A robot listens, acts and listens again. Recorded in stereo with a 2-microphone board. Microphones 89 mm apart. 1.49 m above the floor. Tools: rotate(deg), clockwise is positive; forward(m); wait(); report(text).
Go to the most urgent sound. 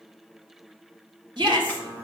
rotate(55)
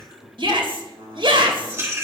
rotate(70)
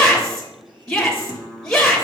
forward(1.0)
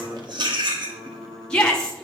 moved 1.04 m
rotate(-10)
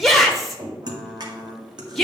forward(1.0)
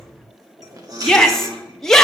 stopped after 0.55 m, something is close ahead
report("I am next to the shout.")